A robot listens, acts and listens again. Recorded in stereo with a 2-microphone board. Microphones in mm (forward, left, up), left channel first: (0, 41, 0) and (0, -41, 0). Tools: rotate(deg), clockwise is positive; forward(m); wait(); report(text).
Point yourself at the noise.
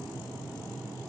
wait()
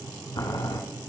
rotate(-50)
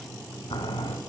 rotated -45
rotate(-85)
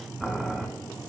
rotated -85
report("Found it: boiling, straight ahead, 1 to 2 m away.")